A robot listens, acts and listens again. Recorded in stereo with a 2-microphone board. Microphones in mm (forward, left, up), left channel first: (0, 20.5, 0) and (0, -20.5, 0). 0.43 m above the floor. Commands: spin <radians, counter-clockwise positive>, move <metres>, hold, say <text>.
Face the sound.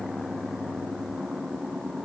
hold
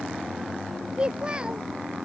spin -0.44
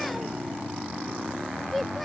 say Facing the child speaking.